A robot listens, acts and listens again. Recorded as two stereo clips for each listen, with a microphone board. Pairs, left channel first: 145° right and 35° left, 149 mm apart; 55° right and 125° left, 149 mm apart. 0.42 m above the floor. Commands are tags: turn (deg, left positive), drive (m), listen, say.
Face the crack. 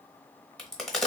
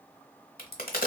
<turn deg="-60"/>
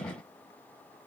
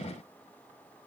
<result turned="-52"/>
<say>Facing where the crack came from. I can't hear it now.</say>